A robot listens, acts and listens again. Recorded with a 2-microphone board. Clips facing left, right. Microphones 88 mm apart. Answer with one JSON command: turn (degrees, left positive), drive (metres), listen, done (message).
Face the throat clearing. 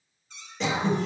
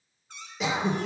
{"turn": -30}
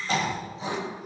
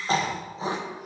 {"turn": -145}
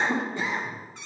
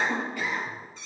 {"turn": 25}
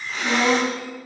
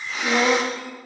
{"done": "Found it: throat clearing, straight ahead, under 1 m away."}